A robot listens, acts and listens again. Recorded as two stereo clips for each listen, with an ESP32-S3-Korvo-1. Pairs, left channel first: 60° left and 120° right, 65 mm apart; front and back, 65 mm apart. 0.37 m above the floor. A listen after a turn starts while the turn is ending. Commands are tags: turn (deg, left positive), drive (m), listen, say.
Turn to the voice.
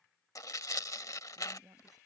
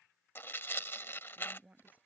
<turn deg="-115"/>
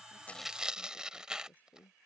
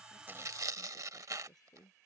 <say>Found it: a woman speaking, straight ahead.</say>